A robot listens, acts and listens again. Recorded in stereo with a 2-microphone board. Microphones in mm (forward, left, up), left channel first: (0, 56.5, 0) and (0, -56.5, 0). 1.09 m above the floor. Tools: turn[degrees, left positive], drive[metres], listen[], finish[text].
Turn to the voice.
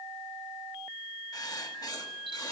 Action: listen[]
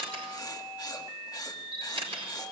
Action: listen[]
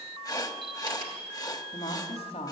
Thought: The woman speaking: about 65° left or 115° left.
Action: turn[65]
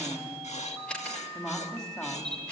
Action: finish[Found it: a woman speaking, straight ahead, 2 to 4 m away.]